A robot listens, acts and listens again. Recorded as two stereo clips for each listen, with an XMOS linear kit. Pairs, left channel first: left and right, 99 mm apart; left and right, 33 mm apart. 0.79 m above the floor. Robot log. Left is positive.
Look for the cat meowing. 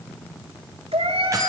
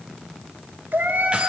cmd yaw -90
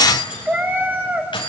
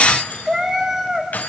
note: So it is at 20° right.
cmd yaw -20
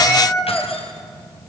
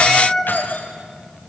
end: Found it: a cat meowing, straight ahead.